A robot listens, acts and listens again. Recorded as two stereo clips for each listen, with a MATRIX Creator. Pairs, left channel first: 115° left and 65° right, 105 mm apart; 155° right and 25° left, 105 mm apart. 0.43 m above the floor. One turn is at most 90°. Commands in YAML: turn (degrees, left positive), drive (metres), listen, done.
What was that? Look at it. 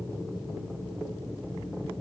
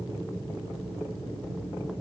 listen: true
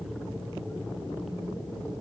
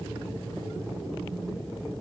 listen: true
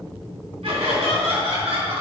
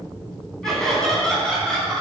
turn: -75
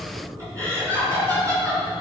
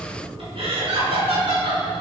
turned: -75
turn: -10
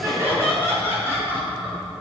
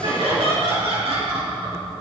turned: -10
done: "Found it: laughter, straight ahead."